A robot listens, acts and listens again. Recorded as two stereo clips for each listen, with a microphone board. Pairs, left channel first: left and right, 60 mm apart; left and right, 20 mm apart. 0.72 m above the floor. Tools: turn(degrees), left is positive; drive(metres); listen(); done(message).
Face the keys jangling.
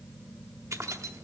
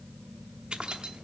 turn(degrees=-55)
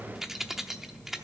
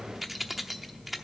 done("Facing the keys jangling.")